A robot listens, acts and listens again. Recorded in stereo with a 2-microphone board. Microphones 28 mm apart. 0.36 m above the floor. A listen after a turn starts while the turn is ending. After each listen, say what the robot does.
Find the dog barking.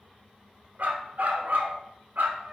Turn 90° right.
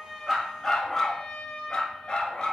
Turn 35° left.
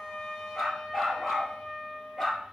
Found it: a dog barking, straight ahead, 2 to 4 m away.